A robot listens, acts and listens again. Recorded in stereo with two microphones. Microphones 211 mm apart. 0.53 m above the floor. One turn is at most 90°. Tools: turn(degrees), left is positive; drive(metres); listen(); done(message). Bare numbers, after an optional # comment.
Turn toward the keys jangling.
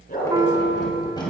# The keys jangling: about 20° left or 160° left.
turn(20)
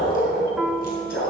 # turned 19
listen()
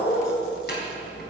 # So it is at 130° left.
turn(90)
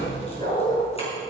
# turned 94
# Nothing new. It was at 35° left.
turn(35)
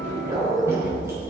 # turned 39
# The keys jangling is now 15° right.
turn(-15)
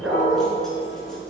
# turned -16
listen()
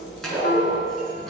done("Found it: keys jangling, straight ahead.")